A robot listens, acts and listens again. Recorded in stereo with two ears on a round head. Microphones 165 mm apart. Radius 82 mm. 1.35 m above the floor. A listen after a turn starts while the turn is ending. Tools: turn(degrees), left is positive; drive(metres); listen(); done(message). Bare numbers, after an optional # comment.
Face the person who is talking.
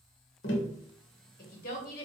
# The woman speaking: about 50° left or 130° left.
turn(50)
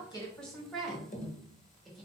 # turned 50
done("Found it: a woman speaking, straight ahead.")